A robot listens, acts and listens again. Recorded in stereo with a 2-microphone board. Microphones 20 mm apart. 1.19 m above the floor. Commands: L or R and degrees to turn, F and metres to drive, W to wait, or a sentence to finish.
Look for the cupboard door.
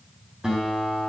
W
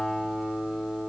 W
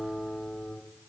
I can't make out a cupboard door to turn to.